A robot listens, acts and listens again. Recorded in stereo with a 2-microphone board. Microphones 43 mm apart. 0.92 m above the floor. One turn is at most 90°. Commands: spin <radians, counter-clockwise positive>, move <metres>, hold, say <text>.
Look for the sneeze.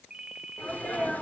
spin 0.61
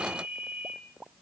hold
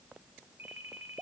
say I heard a sneeze, but can't make it out now. It was about straight ahead or 110° left.